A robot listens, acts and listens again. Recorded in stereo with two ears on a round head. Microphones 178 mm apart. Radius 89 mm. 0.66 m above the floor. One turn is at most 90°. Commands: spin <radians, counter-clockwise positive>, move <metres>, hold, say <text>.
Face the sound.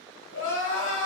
spin 1.05
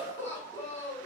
spin 0.35
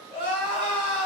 say Facing the crying, 1 to 2 m away.